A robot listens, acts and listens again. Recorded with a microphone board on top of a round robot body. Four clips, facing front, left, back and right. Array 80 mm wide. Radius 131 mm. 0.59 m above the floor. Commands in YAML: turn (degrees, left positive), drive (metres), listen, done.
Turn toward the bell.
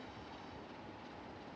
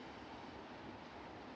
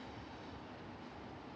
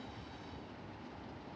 listen: true
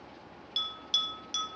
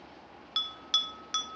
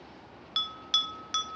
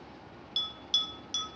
turn: 135
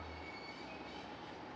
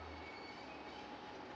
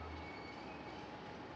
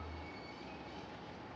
listen: true
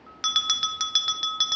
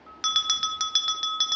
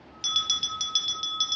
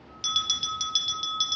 turn: 50
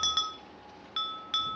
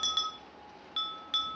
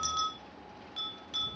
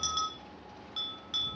turn: 15
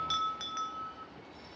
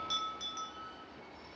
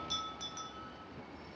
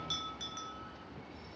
done: "Found it: a bell, straight ahead, under 1 m away."